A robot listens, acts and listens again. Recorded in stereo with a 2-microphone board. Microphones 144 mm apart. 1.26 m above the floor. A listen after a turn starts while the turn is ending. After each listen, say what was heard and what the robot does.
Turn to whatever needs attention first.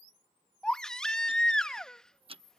Turn 30° left.
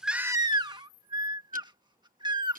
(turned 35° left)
So it is at 30° right. Turn 30° right.
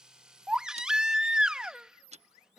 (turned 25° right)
Facing the baby crying.